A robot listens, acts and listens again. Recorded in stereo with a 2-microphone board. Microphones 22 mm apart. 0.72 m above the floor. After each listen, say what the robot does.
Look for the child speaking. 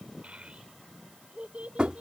Turn 75° right.
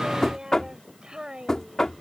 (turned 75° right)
Turn 40° right.
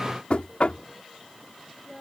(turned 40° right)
Turn 10° right.
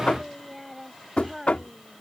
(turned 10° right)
Facing the child speaking.